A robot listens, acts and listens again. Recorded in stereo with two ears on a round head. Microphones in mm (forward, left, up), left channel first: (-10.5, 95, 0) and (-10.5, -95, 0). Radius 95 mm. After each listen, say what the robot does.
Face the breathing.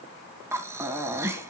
Turn 30° right.
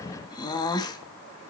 Turn 20° left.
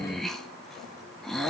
Facing the breathing, 2 to 4 m away.